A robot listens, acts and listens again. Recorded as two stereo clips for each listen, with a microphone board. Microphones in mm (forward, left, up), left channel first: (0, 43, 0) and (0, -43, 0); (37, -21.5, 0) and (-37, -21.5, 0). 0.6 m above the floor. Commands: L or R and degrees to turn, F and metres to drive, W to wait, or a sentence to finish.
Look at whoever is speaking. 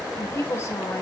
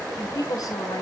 L30
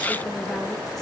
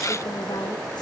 W
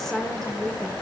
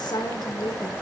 Facing the woman speaking.